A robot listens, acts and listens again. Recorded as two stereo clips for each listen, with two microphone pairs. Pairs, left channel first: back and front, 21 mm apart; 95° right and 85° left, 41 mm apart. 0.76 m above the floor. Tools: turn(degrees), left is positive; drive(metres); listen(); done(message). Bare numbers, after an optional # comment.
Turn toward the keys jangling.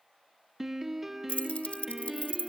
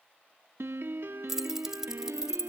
# The keys jangling: 160° left.
turn(160)
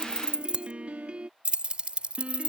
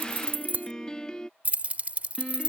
# The keys jangling is now 25° left.
turn(25)
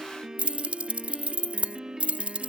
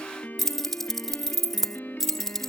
# The keys jangling is now 15° right.
turn(-15)
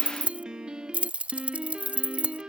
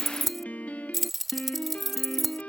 done("Facing the keys jangling.")